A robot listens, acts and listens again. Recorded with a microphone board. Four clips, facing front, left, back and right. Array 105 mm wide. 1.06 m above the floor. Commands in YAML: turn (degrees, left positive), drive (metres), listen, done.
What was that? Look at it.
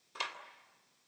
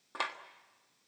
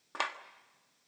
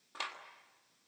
turn: 155
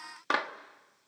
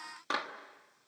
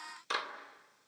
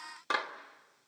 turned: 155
done: "Found it: a clap, straight ahead, 1 to 2 m away."